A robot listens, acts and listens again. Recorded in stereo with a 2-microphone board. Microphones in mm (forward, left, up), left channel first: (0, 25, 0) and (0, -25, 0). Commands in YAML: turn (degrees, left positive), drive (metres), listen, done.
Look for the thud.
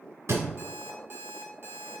turn: -90
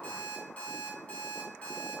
done: "Facing where the thud came from. I can't hear it now."